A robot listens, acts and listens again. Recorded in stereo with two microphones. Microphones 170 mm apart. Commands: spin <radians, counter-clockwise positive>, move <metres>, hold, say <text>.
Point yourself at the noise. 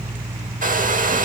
spin -0.87
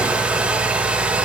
say Found it: a hair dryer, straight ahead.